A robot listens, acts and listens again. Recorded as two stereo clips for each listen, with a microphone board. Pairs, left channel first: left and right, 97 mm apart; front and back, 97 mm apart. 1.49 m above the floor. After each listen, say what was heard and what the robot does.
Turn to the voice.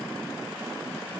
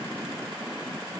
Keep listening.
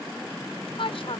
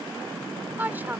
The woman speaking: 110° left. Turn 110° left.
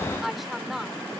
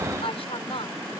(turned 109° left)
Found it: a woman speaking, straight ahead.